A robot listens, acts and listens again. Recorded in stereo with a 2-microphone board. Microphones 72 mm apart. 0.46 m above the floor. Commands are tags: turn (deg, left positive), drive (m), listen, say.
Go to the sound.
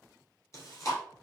<turn deg="40"/>
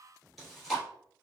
<drive m="1.0"/>
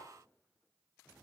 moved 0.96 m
<listen/>
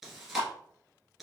<drive m="1.0"/>
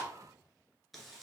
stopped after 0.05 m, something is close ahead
<listen/>
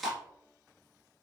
<say>I am next to the chewing.</say>